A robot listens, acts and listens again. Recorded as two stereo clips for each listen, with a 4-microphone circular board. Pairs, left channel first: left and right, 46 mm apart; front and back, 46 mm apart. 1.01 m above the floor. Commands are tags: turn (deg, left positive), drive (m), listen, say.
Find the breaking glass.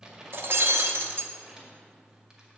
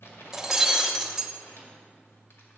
<turn deg="-105"/>
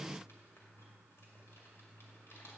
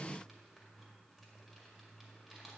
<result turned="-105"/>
<say>I heard breaking glass from this way, but can't make it out now.</say>